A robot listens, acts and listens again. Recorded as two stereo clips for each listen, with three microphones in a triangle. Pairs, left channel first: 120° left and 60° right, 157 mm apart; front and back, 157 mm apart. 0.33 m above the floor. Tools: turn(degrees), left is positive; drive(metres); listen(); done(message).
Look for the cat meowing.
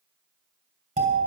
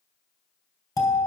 listen()
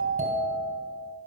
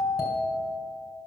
listen()
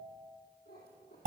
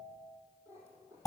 turn(degrees=105)
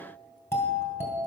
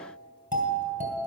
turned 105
listen()
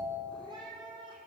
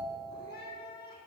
done("Facing the cat meowing.")